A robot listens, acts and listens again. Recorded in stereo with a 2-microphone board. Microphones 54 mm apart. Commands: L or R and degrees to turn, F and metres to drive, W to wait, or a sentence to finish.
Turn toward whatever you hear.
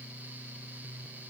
W
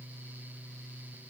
W
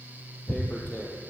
L35
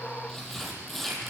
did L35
Found it: tearing paper, straight ahead, 2 to 4 m away.